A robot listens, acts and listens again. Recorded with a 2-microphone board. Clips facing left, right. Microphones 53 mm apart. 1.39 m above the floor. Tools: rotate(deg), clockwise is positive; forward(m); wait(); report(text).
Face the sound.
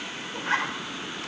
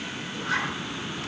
rotate(-30)
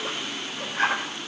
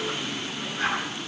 rotate(-120)
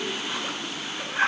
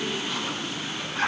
rotate(-20)
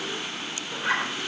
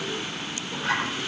rotate(-10)
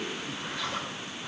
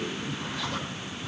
wait()
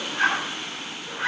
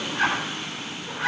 report("Facing the zipper, over 4 m away.")